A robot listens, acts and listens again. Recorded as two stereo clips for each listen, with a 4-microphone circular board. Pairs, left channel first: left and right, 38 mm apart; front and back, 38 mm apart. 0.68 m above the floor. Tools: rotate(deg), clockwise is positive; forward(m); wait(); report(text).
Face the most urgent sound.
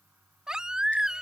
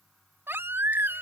rotate(160)
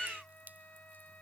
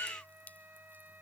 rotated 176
rotate(-15)
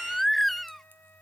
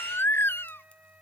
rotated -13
report("Found it: a baby crying, straight ahead.")